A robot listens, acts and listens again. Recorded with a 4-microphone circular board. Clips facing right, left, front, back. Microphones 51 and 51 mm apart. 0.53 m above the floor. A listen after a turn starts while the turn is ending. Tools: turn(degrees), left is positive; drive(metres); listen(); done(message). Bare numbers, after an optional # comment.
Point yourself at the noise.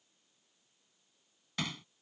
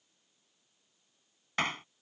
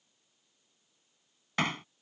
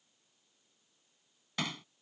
# The hammering: 45° left.
turn(45)
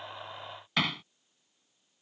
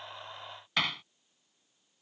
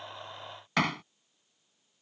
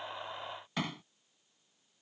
done("Facing the hammering.")